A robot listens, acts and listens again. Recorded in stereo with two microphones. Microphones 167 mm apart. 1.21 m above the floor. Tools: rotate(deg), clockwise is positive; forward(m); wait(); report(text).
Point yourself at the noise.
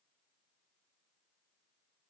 wait()
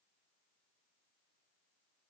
wait()
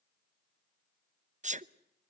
rotate(45)
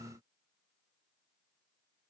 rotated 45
wait()
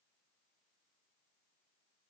report("I heard a sneeze, but can't make it out now. It was about straight ahead or 90° right.")